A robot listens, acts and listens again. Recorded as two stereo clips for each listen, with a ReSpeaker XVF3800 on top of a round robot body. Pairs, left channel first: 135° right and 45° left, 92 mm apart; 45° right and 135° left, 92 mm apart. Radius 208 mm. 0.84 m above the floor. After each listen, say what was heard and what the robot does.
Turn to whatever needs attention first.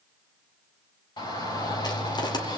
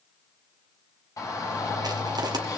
The shout: 100° right. Turn 100° right.
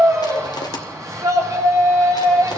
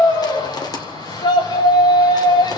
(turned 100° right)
The shout is now 10° right. Turn 10° right.
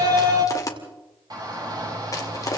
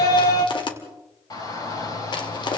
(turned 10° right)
Facing the shout, over 4 m away.